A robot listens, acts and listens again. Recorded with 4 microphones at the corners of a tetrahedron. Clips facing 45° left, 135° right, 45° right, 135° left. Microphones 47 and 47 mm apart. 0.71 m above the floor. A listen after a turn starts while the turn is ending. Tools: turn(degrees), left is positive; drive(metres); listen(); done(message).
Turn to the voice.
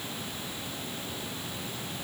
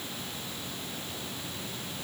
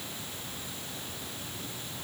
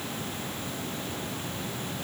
listen()
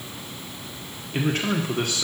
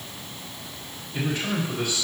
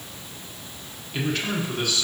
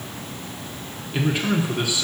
turn(degrees=60)
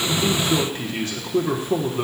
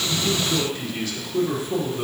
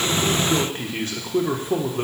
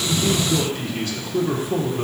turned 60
done("Found it: a man speaking, straight ahead, 1 to 2 m away.")